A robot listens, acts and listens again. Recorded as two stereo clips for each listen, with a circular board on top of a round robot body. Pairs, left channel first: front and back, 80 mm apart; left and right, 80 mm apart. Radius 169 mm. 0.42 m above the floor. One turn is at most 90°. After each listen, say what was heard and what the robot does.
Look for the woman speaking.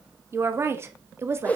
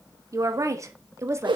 The woman speaking: 135° right. Turn 90° right.
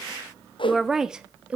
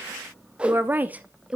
The woman speaking is now 150° right. Turn 90° right.
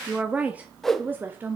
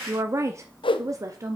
The woman speaking is now 125° right. Turn 90° right.
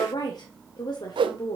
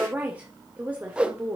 The woman speaking is now 20° right. Turn 20° right.
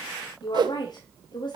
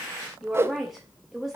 Found it: a woman speaking, straight ahead.